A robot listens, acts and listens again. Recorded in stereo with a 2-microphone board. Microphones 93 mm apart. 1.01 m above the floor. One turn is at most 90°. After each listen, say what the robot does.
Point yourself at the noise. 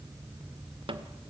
Turn 70° right.
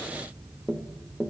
Turn 10° right.
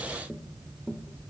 Facing the tapping.